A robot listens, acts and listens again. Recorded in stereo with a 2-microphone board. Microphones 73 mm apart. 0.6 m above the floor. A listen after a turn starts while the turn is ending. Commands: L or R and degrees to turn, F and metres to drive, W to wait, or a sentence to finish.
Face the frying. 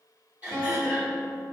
W
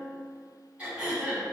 W
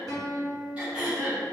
I can't make out frying, only throat clearing and a guitar.